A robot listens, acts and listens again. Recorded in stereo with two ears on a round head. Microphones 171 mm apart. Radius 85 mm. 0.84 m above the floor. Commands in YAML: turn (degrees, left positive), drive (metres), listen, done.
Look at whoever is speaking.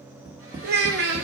turn: -55
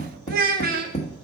turn: -60
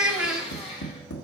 done: "Found it: a child speaking, straight ahead, 1 to 2 m away."